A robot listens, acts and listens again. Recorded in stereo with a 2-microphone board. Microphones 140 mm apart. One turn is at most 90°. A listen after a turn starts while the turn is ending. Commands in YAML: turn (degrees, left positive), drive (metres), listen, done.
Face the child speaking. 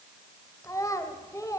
turn: 20
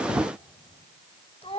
turn: 90
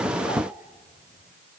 turn: 45
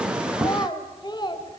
turn: 30
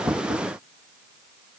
listen: true
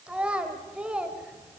done: "Facing the child speaking."